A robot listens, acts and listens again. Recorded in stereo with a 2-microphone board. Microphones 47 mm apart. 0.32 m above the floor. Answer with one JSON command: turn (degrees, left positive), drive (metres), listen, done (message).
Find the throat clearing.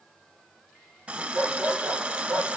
{"listen": true}
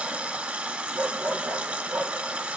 {"listen": true}
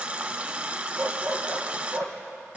{"done": "I can't make out throat clearing, only a dog barking and a running tap."}